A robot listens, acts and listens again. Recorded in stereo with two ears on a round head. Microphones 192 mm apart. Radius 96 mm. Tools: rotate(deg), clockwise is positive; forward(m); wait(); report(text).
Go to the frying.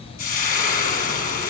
rotate(-45)
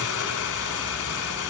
rotate(-95)
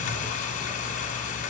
rotate(-40)
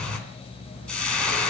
forward(1.0)
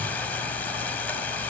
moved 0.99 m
rotate(-10)
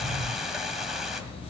forward(1.0)
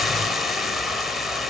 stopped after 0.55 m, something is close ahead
report("Arrived at the frying, straight ahead.")